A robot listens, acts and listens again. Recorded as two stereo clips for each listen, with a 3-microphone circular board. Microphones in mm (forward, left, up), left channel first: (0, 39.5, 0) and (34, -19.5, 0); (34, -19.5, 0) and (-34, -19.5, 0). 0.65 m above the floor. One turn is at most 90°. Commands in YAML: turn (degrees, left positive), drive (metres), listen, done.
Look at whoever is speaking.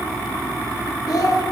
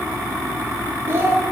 turn: 90
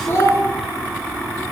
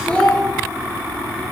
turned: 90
turn: 75
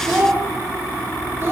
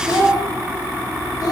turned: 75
turn: -10
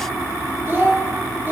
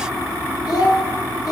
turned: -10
done: "Found it: a child speaking, straight ahead, under 1 m away."